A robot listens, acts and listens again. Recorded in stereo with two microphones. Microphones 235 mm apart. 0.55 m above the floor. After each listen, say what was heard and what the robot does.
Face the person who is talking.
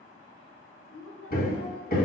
The woman speaking: about 60° left or 120° left. Turn 60° left.
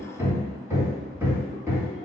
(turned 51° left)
Keep listening.
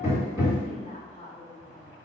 So it is at 30° left. Turn 30° left.
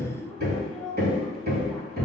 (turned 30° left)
Facing the woman speaking, 1 to 2 m away.